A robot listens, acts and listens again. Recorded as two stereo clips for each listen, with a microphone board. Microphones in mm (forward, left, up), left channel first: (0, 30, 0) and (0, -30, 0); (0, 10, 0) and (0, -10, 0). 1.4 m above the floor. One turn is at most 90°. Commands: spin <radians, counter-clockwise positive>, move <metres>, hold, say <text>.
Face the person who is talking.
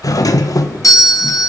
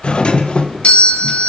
hold
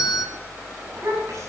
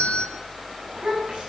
spin -1.05
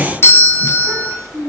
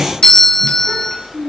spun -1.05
spin -1.05
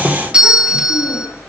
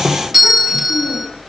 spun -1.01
hold
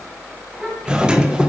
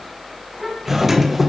say Facing the child speaking.